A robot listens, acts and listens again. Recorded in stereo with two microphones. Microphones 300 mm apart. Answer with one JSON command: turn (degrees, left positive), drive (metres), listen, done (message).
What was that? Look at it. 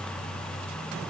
{"listen": true}
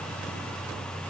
{"listen": true}
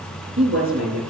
{"turn": -45}
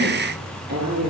{"turn": -90}
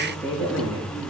{"done": "Found it: a woman speaking, straight ahead, over 4 m away."}